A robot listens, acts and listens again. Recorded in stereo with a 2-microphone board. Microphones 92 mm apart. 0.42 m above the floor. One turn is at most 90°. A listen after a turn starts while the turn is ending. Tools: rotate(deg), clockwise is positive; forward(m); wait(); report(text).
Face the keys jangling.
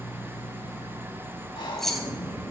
rotate(-30)
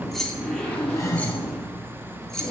rotate(-30)
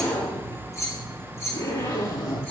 rotate(-90)
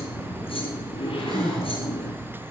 rotate(-65)
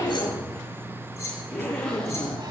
rotate(-25)
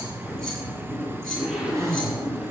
wait()
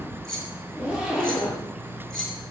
report("Found it: keys jangling, straight ahead.")